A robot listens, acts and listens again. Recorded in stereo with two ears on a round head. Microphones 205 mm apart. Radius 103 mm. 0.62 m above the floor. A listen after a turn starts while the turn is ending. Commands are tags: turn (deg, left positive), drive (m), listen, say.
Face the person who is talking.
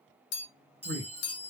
<turn deg="-55"/>
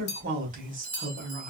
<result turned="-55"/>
<turn deg="-45"/>
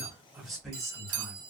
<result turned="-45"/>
<say>Found it: a man speaking, straight ahead.</say>